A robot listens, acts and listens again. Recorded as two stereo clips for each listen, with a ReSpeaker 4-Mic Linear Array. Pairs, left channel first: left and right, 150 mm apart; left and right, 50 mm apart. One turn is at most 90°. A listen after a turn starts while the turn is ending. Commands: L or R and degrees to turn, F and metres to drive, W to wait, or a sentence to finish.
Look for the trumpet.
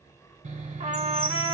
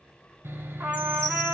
R45
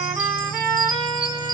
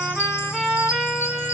Facing the trumpet.